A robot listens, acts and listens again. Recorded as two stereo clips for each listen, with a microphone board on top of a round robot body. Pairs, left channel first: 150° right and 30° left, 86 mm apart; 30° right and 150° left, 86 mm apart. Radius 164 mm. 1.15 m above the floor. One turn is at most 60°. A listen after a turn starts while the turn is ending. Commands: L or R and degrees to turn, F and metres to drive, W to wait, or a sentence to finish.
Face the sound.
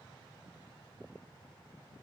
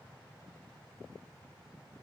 W
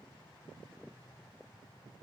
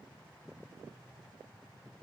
W
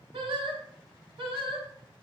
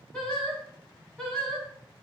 L55
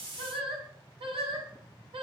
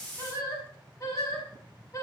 L25
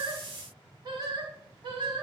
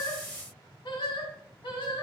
Found it: singing, straight ahead.